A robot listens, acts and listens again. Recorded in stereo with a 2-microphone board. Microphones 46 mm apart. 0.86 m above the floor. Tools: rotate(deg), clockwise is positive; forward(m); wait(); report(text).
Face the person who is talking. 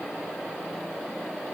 wait()
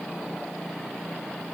wait()
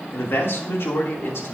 rotate(-70)
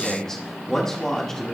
rotate(-15)
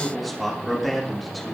report("Found it: a man speaking, straight ahead.")